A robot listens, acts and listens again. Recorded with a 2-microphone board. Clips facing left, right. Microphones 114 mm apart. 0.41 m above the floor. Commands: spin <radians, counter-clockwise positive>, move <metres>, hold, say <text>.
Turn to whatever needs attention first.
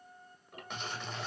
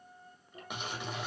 hold
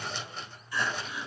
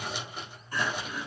spin -0.79
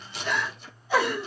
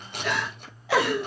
spin -1.48
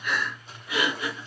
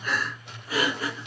spin -0.70
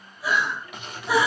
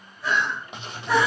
spin 0.17
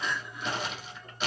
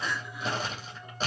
say Found it: crying, straight ahead, 2 to 4 m away.